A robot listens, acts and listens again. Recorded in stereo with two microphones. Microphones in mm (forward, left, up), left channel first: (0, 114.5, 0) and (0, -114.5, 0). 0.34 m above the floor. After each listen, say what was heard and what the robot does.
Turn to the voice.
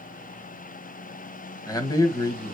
The man speaking: about 15° left or 165° left. Turn 15° left.
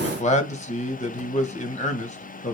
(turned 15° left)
So it is at 150° left. Turn 150° left.
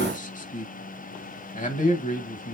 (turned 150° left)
The man speaking is now 40° left. Turn 40° left.
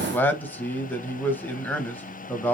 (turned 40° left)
The man speaking is now 10° left. Turn 10° left.
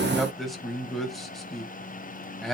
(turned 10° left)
Facing the man speaking.